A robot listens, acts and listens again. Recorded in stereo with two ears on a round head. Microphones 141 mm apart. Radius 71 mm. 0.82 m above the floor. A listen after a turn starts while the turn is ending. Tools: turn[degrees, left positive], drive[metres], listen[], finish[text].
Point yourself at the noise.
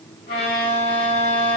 Thought: The violin: about 65° left or 115° left.
Action: turn[65]
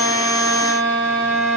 Thought: So it is at 40° left.
Action: turn[40]
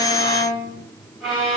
Action: finish[Facing the violin.]